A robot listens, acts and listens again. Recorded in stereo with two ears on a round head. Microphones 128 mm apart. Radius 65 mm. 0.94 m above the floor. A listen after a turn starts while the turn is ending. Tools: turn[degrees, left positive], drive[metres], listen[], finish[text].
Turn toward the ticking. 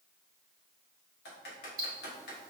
Thought: The ticking: about 30° right or 150° right.
Action: turn[-30]
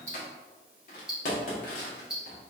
Action: finish[Found it: ticking, straight ahead, 1 to 2 m away.]